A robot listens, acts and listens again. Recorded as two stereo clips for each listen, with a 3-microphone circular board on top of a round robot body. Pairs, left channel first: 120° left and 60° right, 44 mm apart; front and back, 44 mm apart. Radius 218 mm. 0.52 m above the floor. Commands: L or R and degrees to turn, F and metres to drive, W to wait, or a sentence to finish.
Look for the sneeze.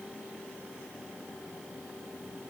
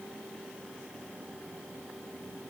W
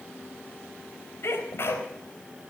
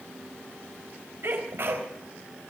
L150
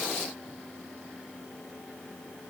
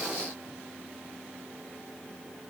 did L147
I heard a sneeze from this way, but can't make it out now.